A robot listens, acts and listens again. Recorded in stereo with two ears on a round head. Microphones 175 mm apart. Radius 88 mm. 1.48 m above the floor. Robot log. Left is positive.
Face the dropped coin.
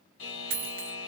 note: The dropped coin: about 50° right or 130° right.
cmd yaw -50
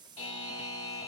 cmd idle
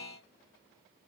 end: I heard a dropped coin, but can't make it out now. It was about straight ahead or 80° right.